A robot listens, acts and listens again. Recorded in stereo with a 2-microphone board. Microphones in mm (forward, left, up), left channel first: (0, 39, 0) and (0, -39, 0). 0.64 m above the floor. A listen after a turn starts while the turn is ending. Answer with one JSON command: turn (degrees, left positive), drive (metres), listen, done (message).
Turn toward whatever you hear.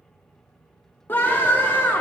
{"turn": 25}
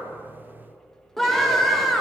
{"done": "Facing the scream."}